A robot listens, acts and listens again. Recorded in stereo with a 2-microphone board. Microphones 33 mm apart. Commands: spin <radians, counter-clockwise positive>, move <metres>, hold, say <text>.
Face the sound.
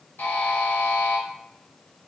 spin 1.57
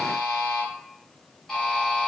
spin 0.17
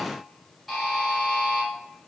say Found it: a buzzer, straight ahead, 1 to 2 m away.